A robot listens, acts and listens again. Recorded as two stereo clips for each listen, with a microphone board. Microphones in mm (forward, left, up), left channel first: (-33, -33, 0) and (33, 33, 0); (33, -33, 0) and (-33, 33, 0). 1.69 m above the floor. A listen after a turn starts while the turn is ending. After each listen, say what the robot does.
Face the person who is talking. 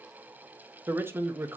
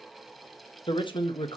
Turn 20° right.
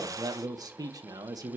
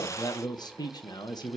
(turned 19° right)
Found it: a man speaking, straight ahead, 1 to 2 m away.